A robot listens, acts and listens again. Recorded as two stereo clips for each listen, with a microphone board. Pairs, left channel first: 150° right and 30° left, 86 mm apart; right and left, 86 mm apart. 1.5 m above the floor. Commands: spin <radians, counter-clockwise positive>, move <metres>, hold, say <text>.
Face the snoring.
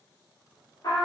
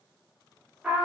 hold
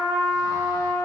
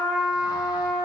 hold
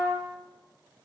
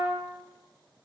say I can't make out snoring to turn to.